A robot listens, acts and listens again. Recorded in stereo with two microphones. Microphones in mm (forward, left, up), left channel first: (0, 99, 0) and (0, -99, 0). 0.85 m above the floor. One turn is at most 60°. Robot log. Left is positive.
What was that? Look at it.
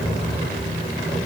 cmd idle
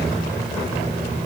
cmd idle
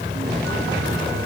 end: I can't make out anything.